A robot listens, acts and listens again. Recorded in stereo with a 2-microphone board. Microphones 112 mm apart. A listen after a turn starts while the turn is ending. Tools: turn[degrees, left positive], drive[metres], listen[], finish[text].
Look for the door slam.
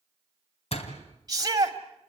Thought: The door slam: about 60° left or 120° left.
Action: turn[60]
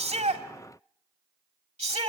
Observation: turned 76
Action: listen[]
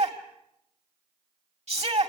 Action: finish[I heard a door slam, but can't make it out now. It was about 15° right or 40° left.]